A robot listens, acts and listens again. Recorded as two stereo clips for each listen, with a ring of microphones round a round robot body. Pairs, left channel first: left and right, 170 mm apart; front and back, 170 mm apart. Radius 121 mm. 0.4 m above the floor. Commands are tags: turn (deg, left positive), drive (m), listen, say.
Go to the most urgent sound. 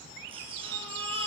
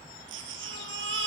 <turn deg="-160"/>
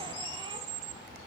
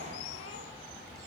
<listen/>
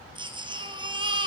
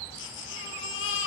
<turn deg="-25"/>
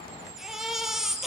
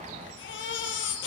<drive m="1.0"/>
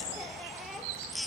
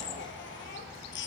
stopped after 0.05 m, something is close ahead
<say>Blocked. The baby crying is further on, straight ahead.</say>